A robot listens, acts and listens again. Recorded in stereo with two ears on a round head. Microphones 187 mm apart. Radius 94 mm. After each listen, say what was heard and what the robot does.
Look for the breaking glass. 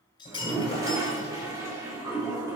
The breaking glass: about 20° left or 160° left. Turn 20° left.
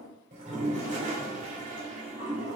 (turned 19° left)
Keep listening.
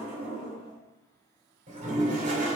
I heard breaking glass, but can't make it out now. It was about 5° left or 140° left.